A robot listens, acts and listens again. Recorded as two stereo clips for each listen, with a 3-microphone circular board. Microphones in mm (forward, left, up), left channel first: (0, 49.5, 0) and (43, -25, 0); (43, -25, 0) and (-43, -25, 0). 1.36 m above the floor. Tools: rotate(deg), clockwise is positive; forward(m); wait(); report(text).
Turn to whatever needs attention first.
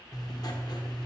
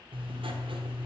wait()
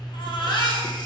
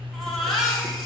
rotate(-90)
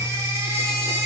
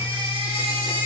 report("Found it: a baby crying, straight ahead, 2 to 4 m away.")